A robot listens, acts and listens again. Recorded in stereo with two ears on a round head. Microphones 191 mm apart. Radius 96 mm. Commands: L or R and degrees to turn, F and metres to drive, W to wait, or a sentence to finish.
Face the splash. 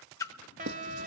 L15
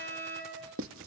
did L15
W
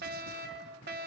I heard a splash, but can't make it out now. It was about straight ahead or 150° left.